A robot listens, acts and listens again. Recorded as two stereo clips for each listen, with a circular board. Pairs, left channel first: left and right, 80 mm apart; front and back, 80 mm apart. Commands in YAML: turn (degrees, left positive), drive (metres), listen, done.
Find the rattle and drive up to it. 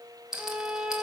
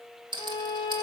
turn: -175
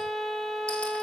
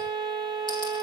listen: true
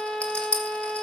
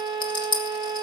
turn: 15
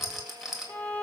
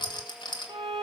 drive: 1.0
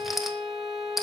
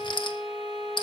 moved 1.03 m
drive: 1.0
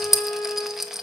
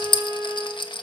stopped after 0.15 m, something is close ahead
done: "I am next to the rattle."